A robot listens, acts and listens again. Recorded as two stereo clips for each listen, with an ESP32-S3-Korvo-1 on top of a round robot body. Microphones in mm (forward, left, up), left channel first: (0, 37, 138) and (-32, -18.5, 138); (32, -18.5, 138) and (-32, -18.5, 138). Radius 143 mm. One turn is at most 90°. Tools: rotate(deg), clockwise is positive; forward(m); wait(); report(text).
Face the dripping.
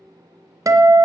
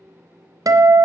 wait()
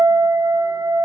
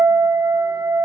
wait()
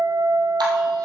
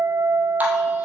rotate(90)
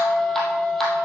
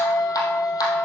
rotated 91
rotate(25)
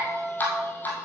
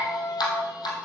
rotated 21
report("Found it: dripping, straight ahead, 2 to 4 m away.")